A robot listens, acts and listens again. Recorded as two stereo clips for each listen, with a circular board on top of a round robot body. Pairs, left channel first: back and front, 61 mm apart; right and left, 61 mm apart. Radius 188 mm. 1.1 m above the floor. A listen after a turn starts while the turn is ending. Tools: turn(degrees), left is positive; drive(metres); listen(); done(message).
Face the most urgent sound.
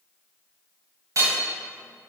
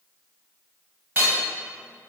listen()
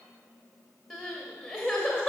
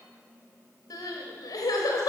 turn(degrees=-85)
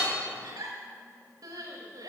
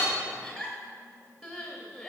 done("Facing the crying, under 1 m away.")